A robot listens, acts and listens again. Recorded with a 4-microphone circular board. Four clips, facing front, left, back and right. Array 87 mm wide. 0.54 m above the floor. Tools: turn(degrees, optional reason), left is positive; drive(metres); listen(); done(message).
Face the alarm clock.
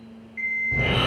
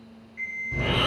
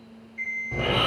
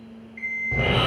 turn(degrees=-10, reason="The alarm clock: 10° right.")
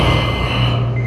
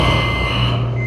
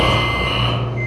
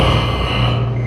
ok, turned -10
listen()
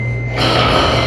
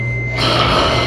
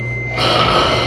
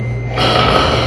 listen()
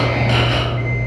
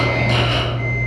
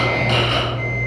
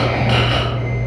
done("I heard an alarm clock from this way, but can't make it out now.")